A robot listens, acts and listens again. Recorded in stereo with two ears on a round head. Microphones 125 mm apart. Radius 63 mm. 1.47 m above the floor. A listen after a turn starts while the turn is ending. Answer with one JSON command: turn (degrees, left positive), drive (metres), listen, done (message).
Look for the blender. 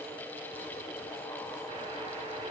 {"listen": true}
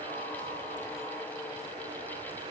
{"listen": true}
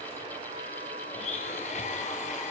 {"turn": 55}
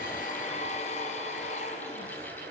{"listen": true}
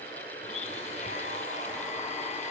{"turn": 60}
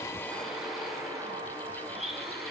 {"done": "Facing the blender, 2 to 4 m away."}